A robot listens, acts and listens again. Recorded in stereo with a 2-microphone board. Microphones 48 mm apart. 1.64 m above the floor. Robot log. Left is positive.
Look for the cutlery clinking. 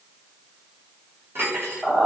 note: The cutlery clinking: about 60° right or 120° right.
cmd yaw -60
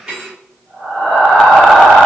note: So it is at 25° right.
cmd yaw -25
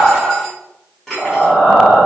end: Facing the cutlery clinking.